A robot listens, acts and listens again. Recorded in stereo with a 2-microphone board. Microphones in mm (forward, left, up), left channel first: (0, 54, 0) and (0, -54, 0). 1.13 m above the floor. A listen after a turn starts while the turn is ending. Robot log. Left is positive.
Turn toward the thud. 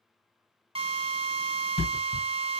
cmd yaw +90
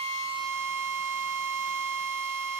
end: Facing where the thud came from. I can't hear it now.